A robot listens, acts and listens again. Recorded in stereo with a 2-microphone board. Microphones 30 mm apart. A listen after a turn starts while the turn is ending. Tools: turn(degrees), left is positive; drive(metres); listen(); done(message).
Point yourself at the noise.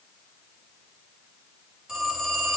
turn(degrees=-25)
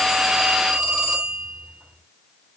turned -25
turn(degrees=-130)
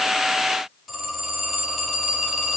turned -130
done("Found it: a phone ringing, straight ahead, over 4 m away.")